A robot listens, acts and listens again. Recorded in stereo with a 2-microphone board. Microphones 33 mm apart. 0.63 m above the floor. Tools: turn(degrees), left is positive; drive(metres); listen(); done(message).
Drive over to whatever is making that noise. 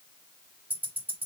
turn(degrees=-60)
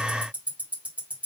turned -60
turn(degrees=-55)
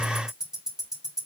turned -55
turn(degrees=-20)
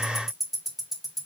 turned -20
turn(degrees=-10)
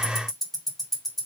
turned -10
drive(metres=1.0)
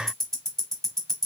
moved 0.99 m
turn(degrees=15)
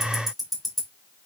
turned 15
drive(metres=1.0)
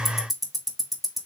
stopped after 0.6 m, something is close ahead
done("Arrived at the ticking, straight ahead.")